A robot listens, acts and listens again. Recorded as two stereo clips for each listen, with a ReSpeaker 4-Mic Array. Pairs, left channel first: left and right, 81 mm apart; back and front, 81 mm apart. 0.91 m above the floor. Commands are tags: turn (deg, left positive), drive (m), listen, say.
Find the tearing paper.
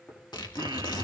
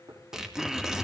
<turn deg="85"/>
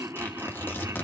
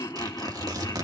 <turn deg="30"/>
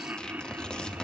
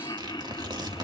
<turn deg="10"/>
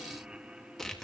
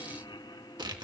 <say>Found it: tearing paper, straight ahead, 2 to 4 m away.</say>